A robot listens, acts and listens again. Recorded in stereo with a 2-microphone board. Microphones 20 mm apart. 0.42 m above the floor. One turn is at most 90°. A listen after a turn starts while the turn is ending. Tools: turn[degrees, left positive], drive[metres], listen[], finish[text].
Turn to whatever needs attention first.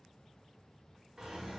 Action: listen[]
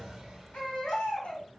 Action: turn[90]
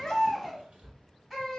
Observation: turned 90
Action: finish[Found it: a baby crying, straight ahead.]